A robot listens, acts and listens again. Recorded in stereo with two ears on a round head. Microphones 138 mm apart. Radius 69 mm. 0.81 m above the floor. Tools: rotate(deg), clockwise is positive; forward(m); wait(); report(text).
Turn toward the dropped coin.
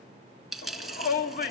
rotate(-30)
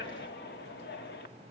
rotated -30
wait()
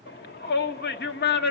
report("I heard a dropped coin, but can't make it out now. It was about 30° right or 150° left.")